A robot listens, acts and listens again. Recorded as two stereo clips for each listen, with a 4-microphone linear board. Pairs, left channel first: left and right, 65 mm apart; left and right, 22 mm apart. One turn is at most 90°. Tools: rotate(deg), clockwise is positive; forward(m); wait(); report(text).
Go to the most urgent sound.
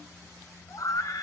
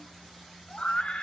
rotate(-60)
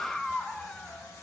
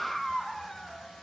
forward(1.0)
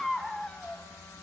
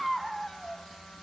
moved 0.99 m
forward(1.0)
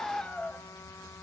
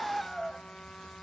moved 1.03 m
rotate(-20)
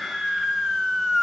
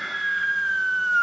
forward(1.0)
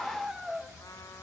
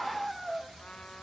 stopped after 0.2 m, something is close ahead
report("Arrived at the scream, straight ahead.")